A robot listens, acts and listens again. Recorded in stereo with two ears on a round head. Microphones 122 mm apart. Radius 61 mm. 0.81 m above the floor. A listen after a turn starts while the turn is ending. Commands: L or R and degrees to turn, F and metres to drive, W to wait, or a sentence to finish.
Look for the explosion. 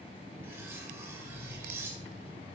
L50
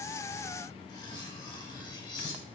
W
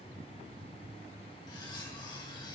I heard an explosion, but can't make it out now. It was about straight ahead or 80° left.